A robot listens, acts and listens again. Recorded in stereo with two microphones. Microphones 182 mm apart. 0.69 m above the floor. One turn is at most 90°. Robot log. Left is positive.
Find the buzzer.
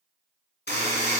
cmd yaw +90
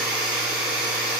end: Found it: a buzzer, straight ahead, 2 to 4 m away.